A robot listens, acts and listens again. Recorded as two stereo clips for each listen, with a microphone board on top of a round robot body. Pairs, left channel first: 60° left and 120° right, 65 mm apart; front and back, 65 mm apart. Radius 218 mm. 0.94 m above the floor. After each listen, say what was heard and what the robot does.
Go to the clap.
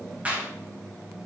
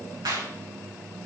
The clap: 175° left. Turn 175° left.
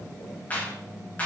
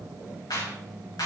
Drive 1.0 m forward.
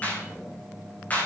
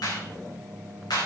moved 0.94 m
Drive 1.0 m forward.
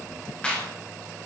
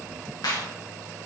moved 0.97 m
The clap is now 15° right. Turn 15° right.
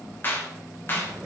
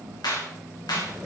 Drive 1.0 m forward.
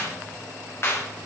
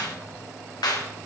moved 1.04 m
The clap is now 10° left. Turn 10° left.
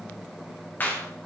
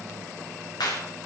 Drive 1.0 m forward.
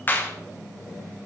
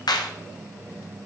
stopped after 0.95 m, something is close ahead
Arrived at the clap, straight ahead.